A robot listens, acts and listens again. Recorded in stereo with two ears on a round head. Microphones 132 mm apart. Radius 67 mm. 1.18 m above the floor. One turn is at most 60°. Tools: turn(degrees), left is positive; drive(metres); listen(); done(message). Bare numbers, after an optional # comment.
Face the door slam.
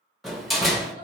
turn(30)
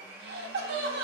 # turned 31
listen()
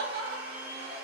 done("I heard a door slam, but can't make it out now. It was about 30° right or 150° left.")